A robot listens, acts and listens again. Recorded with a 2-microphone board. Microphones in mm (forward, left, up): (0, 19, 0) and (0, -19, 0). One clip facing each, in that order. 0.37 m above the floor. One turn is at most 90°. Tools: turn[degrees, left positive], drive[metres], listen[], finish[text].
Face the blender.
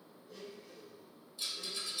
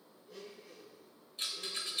Action: turn[-30]
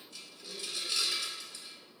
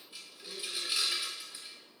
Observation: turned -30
Thought: So it is at 140° right.
Action: turn[-90]
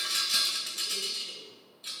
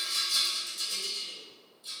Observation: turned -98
Thought: Nothing new. It was at 40° right.
Action: turn[-40]
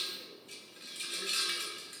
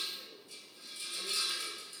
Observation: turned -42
Action: finish[Facing the blender, 1 to 2 m away.]